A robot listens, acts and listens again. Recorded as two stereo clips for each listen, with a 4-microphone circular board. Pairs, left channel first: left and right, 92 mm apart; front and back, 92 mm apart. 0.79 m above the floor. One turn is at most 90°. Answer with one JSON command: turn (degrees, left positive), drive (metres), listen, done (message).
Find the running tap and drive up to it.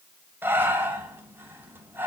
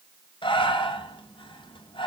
{"listen": true}
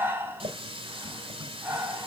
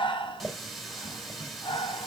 {"turn": -90}
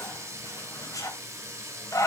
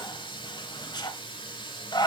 {"turn": -30}
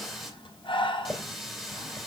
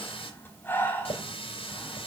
{"drive": 1.0}
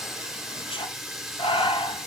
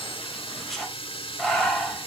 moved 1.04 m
{"drive": 1.0}
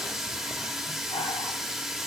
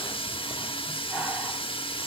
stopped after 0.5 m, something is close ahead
{"done": "Arrived at the running tap, straight ahead."}